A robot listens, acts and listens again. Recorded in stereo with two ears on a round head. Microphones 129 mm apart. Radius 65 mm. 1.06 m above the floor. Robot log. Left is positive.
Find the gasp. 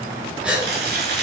cmd yaw -30
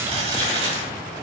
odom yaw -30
cmd idle
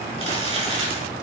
end: I heard a gasp, but can't make it out now. It was about 20° left or 140° right.